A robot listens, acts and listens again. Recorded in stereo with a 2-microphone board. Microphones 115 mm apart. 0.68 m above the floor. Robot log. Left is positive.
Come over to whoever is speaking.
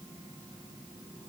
cmd idle
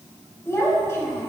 note: The child speaking: about 25° left or 155° left.
cmd yaw +25
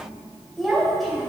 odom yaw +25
cmd fwd 1.0
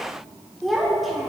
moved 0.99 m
cmd fwd 1.0
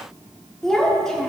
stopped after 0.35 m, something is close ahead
end: I am next to the child speaking.